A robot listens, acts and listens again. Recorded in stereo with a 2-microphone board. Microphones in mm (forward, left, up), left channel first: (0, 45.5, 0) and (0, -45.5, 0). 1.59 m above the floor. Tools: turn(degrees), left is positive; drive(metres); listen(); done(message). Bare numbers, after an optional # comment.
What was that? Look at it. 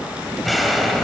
turn(30)
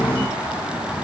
listen()
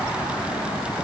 done("I heard an explosion, but can't make it out now. It was about 30° right or 150° left.")